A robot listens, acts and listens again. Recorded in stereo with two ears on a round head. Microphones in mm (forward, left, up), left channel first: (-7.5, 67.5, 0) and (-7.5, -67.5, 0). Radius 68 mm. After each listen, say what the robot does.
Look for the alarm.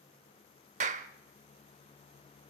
Keep listening.
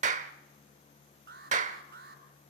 Turn 90° right.
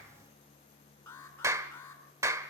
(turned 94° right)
Turn 15° left.
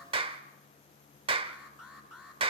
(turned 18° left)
Facing the alarm, over 4 m away.